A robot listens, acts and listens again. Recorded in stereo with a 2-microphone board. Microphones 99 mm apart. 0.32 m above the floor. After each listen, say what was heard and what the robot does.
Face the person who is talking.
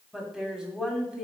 Turn 30° right.
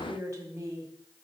So it is at 140° right. Turn 140° right.
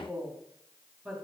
Facing the woman speaking.